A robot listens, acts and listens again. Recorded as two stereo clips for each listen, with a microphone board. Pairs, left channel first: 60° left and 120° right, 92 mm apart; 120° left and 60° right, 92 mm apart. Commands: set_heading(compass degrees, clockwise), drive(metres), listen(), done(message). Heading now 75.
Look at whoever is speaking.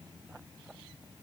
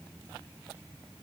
listen()
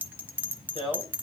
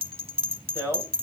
set_heading(15)
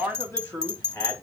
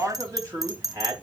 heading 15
done("Found it: a man speaking, straight ahead, 2 to 4 m away.")